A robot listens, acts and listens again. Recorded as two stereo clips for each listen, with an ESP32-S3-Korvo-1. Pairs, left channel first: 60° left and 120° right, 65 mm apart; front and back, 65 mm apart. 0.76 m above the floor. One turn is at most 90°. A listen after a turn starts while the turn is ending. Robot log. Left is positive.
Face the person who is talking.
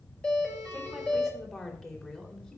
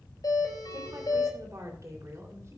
note: The woman speaking: 135° left.
cmd yaw +90
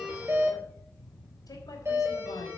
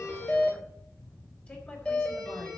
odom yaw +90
note: Nothing new. It was at 45° left.
cmd yaw +45
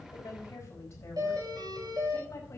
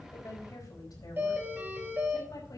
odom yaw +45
note: The woman speaking is now 15° left.
cmd yaw +15
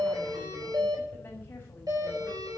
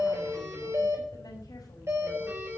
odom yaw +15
cmd idle
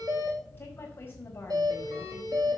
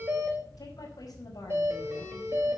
end: Found it: a woman speaking, straight ahead.